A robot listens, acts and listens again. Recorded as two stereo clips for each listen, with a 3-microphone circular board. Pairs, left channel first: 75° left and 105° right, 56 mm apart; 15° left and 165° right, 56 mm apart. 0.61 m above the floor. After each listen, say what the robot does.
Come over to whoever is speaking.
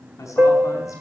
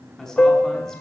Turn 95° left.
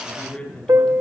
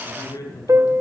Drive 1.0 m forward.
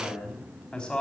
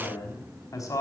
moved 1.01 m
Drive 1.0 m forward.
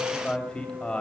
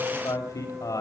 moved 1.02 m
Drive 1.0 m forward.
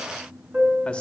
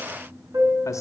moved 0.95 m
Keep listening.
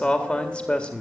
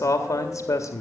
Drive 1.0 m forward.
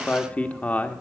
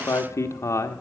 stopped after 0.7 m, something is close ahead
Turn 15° left.
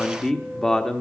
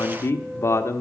I am next to the man speaking.